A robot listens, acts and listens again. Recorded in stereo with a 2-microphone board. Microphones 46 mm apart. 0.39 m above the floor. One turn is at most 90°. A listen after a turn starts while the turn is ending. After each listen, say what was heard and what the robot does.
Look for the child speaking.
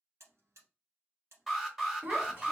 The child speaking: about 45° right or 135° right. Turn 45° right.
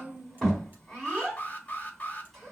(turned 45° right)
Facing the child speaking.